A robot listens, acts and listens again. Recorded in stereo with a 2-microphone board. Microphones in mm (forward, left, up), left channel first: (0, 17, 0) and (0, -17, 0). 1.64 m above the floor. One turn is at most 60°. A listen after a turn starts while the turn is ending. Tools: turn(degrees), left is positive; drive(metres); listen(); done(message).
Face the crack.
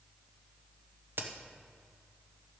turn(degrees=-60)
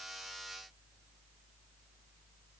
turn(degrees=-30)
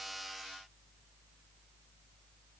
done("Facing where the crack came from. I can't hear it now.")